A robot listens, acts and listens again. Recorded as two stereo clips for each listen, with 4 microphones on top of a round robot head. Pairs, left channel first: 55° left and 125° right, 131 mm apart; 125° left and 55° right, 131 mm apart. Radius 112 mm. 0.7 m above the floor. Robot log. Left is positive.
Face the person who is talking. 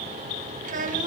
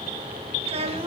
note: The child speaking: 100° right.
cmd yaw -100
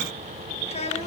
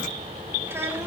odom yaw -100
note: The child speaking is now 15° left.
cmd yaw +15
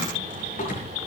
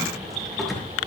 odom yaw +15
cmd idle
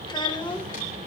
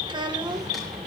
end: Facing the child speaking, 2 to 4 m away.